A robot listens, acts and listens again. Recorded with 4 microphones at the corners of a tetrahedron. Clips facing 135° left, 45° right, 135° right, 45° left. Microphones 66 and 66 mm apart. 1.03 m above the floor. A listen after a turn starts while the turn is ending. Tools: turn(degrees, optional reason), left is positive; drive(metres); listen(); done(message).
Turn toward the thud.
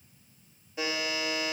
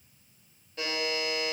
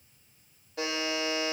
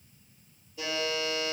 listen()
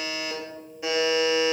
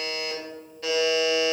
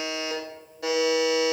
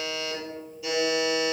listen()
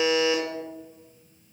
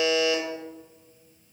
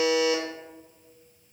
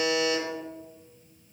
done("I can't make out a thud to turn to.")